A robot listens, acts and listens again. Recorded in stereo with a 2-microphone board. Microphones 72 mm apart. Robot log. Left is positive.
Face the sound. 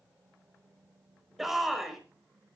cmd yaw +30
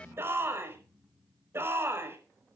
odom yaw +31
note: So it is at 35° right.
cmd yaw -35
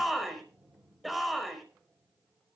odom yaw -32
end: Found it: a shout, straight ahead.